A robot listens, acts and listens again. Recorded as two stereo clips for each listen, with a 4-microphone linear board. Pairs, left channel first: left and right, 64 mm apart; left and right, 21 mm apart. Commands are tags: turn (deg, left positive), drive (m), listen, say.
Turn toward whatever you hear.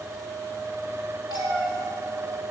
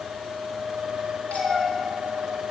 <turn deg="90"/>
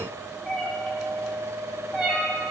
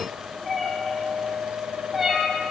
<say>Facing the cat meowing.</say>